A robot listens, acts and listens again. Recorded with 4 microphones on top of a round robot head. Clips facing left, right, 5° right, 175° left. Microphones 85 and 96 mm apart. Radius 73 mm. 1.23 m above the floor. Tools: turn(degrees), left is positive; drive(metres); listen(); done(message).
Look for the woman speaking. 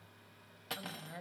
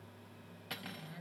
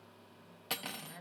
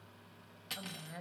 turn(degrees=135)
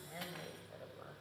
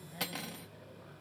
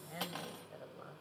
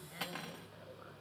turn(degrees=40)
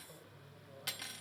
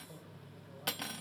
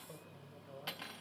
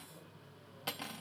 done("Found it: a woman speaking, straight ahead.")